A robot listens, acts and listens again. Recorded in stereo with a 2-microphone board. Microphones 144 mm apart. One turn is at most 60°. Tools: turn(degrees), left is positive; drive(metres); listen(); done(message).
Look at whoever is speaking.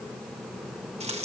listen()
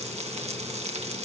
listen()
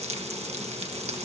done("I can't make out anyone speaking, only frying.")